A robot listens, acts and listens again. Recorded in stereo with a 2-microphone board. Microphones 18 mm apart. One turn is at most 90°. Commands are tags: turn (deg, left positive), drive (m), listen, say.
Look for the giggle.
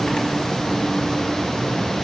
<listen/>
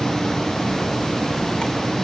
<listen/>
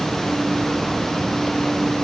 <say>I can't make out a giggle to turn to.</say>